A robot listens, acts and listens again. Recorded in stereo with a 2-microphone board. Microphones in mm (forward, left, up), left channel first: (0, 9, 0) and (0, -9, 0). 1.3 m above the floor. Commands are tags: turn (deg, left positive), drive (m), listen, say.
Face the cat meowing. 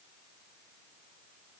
<listen/>
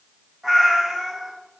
<turn deg="-40"/>
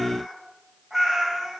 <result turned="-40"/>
<turn deg="-30"/>
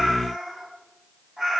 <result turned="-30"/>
<turn deg="-15"/>
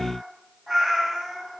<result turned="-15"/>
<say>Found it: a cat meowing, straight ahead, 2 to 4 m away.</say>